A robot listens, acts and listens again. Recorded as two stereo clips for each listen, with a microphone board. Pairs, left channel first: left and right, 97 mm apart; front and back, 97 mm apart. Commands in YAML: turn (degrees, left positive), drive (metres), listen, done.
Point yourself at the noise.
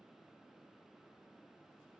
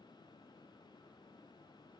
listen: true
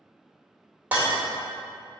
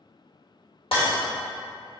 turn: -15
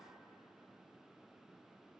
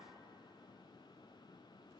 done: "Facing where the breaking glass came from. I can't hear it now."